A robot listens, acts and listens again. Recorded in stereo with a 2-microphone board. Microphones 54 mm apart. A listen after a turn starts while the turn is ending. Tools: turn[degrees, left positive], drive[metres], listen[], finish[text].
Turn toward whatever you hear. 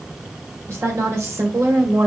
Thought: The woman speaking: about 65° right or 115° right.
Action: turn[-65]
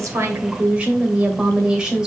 Thought: So it is at 15° right.
Action: turn[-15]
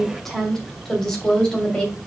Thought: The woman speaking is now 15° left.
Action: turn[15]
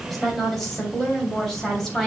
Thought: The woman speaking is now 10° left.
Action: turn[10]
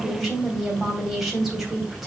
Action: finish[Facing the woman speaking, 2 to 4 m away.]